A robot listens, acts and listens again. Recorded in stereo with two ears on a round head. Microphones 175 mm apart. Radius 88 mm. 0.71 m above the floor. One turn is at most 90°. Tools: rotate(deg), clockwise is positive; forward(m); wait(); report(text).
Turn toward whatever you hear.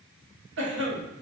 rotate(60)
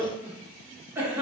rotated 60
rotate(10)
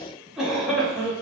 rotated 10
report("Facing the cough, 1 to 2 m away.")